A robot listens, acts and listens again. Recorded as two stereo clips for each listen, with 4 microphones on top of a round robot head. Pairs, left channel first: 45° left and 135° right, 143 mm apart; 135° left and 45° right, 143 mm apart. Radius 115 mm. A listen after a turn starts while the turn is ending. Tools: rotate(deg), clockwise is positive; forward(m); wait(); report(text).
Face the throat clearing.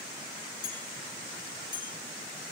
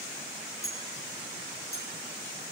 wait()
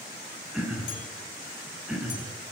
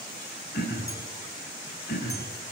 rotate(-140)
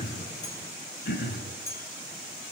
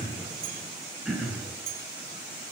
rotate(-45)
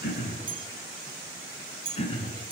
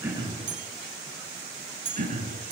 rotate(10)
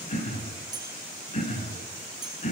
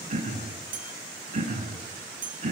report("Found it: throat clearing, straight ahead.")